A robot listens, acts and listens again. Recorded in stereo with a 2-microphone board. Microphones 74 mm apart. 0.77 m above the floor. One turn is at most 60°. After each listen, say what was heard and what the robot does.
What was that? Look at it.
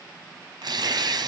The tearing paper: about 70° right or 110° right. Turn 60° right.
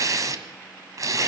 So it is at 50° right. Turn 50° right.
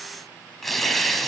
Found it: tearing paper, straight ahead.